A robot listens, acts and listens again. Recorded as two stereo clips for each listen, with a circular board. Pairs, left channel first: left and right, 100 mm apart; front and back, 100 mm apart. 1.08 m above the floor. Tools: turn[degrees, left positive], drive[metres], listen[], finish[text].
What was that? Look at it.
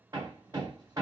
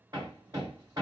Thought: The hammering: 135° right.
Action: turn[-135]
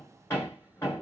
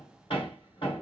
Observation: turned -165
Thought: The hammering is now 30° left.
Action: turn[30]
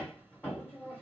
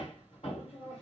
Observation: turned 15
Thought: The hammering is now 15° left.
Action: turn[15]
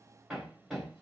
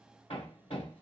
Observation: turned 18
Action: finish[Facing the hammering, 1 to 2 m away.]